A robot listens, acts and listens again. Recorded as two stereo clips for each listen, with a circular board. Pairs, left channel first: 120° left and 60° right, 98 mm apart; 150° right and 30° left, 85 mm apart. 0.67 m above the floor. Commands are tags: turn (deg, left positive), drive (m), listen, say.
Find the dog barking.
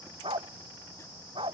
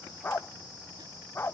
<turn deg="-85"/>
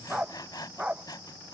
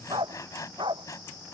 <turn deg="20"/>
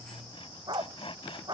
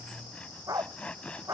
<turn deg="-15"/>
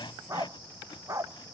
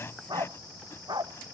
<say>Facing the dog barking.</say>